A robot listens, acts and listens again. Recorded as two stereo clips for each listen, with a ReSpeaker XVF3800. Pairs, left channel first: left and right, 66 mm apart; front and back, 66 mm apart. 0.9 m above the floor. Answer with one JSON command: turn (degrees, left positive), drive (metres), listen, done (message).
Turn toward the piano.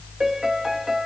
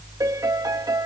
{"turn": -175}
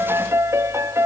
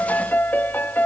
{"turn": -55}
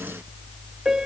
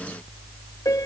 {"turn": -10}
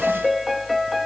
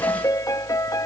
{"done": "Facing the piano."}